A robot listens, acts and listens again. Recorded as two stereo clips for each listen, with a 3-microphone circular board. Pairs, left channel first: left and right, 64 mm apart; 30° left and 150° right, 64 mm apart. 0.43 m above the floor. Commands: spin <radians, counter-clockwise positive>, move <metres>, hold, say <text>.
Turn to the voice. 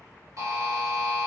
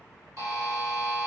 hold
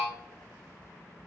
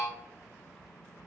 hold
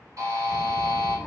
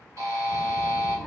spin -2.36
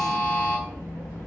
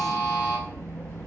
spin 0.52
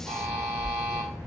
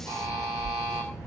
say Found it: a child speaking, straight ahead.